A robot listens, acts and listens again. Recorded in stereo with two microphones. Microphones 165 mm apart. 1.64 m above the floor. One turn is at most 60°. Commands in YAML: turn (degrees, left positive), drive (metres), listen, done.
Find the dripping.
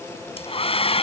listen: true
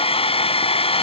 listen: true
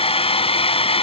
done: "I can't make out dripping to turn to."